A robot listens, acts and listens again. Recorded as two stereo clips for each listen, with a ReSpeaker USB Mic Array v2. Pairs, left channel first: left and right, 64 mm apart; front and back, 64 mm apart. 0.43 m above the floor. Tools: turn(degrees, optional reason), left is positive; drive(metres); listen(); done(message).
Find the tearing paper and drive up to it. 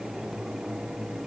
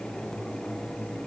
listen()
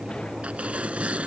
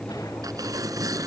turn(degrees=-160, reason="The tearing paper: 160° right.")
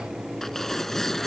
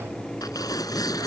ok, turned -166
drive(metres=1.0)
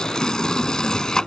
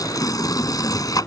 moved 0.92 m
turn(degrees=10, reason="The tearing paper is now 10° left.")
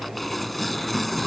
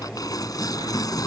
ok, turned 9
drive(metres=1.0)
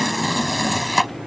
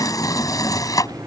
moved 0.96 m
drive(metres=1.0)
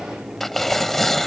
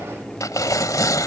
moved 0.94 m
drive(metres=1.0)
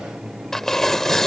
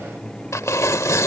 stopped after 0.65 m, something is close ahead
done("Arrived at the tearing paper, straight ahead.")